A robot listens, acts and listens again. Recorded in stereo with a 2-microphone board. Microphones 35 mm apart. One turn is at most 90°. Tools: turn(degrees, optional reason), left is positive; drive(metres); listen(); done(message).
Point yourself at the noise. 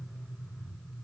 listen()
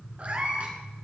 turn(degrees=-40, reason="The cat meowing: about 40° right or 140° right.")
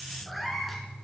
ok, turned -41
done("Facing the cat meowing, 2 to 4 m away.")